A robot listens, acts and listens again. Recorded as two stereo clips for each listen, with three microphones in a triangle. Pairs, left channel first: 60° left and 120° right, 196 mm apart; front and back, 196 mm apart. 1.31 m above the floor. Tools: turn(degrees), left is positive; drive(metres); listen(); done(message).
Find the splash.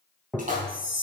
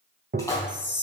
turn(degrees=-75)
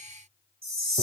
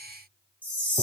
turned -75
done("I heard a splash from this way, but can't make it out now.")